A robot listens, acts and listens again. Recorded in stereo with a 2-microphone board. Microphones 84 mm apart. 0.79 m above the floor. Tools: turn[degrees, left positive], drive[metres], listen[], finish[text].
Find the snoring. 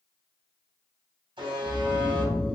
Action: turn[30]
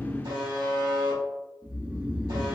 Thought: So it is at 15° right.
Action: turn[-15]
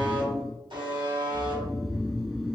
Action: finish[Found it: snoring, straight ahead.]